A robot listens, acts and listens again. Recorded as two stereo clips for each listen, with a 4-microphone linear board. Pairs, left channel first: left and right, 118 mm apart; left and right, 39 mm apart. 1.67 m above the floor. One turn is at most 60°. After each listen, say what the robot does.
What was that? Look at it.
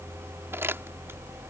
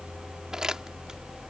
Turn 20° right.
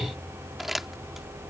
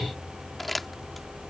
Found it: crumpling, straight ahead.